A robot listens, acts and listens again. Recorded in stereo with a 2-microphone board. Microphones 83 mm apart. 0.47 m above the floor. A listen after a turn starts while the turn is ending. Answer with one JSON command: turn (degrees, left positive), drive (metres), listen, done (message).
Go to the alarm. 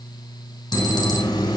{"turn": 65}
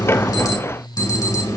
{"turn": 50}
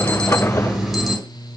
{"drive": 1.0}
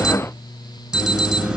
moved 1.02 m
{"drive": 1.0}
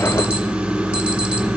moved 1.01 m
{"turn": -15}
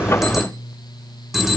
{"drive": 1.0}
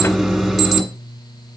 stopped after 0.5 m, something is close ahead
{"done": "I am next to the alarm."}